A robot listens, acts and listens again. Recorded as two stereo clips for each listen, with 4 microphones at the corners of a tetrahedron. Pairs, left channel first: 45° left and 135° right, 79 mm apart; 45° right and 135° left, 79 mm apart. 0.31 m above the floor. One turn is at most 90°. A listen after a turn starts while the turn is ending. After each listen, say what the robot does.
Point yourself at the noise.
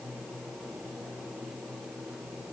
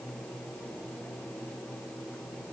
Keep listening.
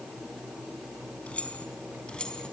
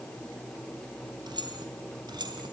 Turn 90° left.
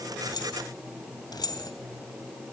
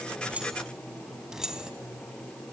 Turn 55° left.
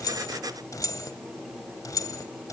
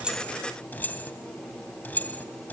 Turn 20° left.
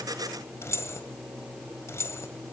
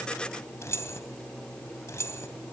Facing the keys jangling.